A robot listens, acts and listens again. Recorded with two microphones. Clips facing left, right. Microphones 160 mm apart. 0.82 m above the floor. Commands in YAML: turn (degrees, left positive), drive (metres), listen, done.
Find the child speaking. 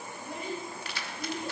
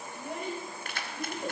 turn: -70
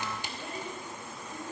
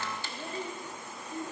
turn: -25
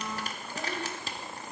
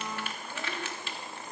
listen: true
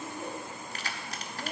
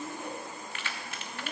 turn: 15
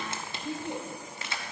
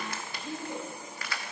turn: 15
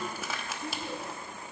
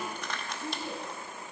done: "Found it: a child speaking, straight ahead."